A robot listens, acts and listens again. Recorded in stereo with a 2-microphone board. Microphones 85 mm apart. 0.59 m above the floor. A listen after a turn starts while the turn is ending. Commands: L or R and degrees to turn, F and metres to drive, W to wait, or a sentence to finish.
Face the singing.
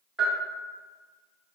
W
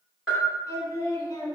L40
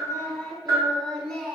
Found it: singing, straight ahead.